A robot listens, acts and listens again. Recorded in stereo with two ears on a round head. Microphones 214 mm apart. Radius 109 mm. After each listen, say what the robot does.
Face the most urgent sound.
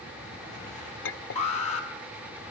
Turn 30° left.
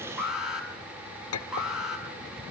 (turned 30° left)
Facing the alarm, over 4 m away.